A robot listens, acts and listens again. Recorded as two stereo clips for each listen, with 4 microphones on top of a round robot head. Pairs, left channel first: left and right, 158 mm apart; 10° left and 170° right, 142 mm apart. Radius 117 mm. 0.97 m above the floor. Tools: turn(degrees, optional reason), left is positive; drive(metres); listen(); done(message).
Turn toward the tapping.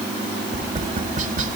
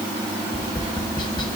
turn(degrees=-50, reason="The tapping: 50° right.")
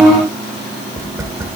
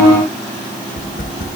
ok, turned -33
turn(degrees=-15, reason="The tapping is now 15° right.")
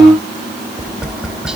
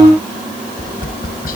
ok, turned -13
done("Found it: tapping, straight ahead, under 1 m away.")